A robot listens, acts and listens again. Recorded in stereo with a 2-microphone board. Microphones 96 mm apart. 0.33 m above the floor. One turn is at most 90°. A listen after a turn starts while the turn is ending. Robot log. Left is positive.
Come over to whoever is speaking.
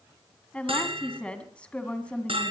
cmd yaw +30
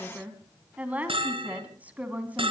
note: So it is at 15° right.
cmd yaw -15
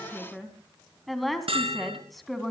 cmd fwd 1.0
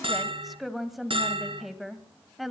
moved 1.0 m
cmd fwd 1.0
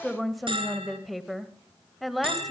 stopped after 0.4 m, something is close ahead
end: Arrived at the woman speaking, straight ahead.